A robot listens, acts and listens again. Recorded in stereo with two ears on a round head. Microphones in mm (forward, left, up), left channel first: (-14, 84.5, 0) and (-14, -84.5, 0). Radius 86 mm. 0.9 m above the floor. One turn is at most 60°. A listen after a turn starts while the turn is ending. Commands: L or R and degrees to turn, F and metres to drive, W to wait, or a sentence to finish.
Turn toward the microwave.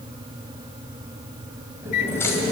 L55
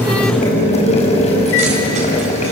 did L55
W
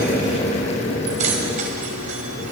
W
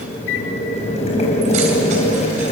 L60
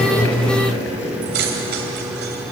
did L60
Facing the microwave.